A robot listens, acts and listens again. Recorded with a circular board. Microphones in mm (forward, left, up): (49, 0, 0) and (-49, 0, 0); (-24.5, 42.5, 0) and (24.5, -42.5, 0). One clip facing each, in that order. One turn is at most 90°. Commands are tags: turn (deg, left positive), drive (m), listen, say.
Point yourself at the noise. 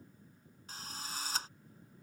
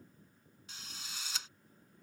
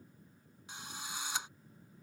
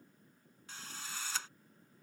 <turn deg="45"/>
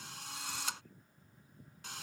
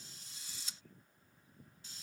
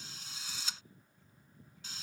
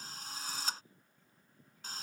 <turn deg="-15"/>
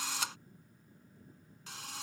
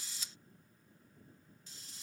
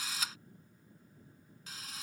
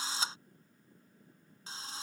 <say>Found it: a drill, straight ahead.</say>